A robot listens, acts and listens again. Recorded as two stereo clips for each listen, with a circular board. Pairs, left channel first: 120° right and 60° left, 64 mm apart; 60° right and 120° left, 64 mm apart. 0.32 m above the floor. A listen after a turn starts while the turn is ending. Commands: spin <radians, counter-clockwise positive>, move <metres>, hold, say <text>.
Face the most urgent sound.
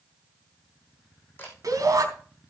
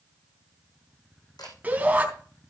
spin 0.96
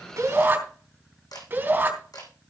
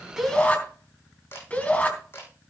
say Found it: a shout, straight ahead, 2 to 4 m away.